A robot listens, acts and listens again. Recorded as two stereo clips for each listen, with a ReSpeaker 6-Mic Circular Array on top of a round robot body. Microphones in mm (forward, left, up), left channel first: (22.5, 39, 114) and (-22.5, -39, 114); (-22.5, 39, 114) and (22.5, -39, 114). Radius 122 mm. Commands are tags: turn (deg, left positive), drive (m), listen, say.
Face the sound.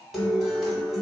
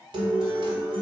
<turn deg="-30"/>
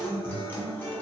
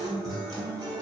<turn deg="-10"/>
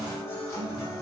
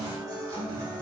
<say>Facing the guitar, 1 to 2 m away.</say>